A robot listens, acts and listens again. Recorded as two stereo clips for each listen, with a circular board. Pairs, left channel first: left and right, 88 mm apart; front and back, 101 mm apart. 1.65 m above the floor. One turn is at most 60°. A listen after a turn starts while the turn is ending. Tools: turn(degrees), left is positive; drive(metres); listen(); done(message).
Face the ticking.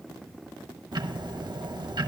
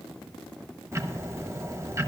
turn(degrees=-60)
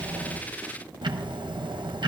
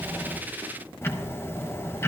turn(degrees=-60)
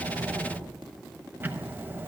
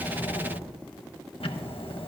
turn(degrees=-25)
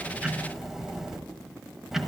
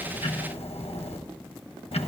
done("Facing the ticking, 1 to 2 m away.")